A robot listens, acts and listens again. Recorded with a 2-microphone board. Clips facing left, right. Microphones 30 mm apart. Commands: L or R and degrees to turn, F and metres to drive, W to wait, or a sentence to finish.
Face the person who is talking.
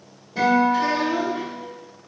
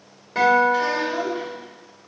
R30
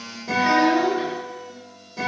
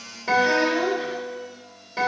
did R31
L20
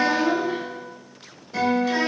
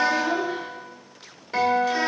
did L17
Facing the child speaking, 2 to 4 m away.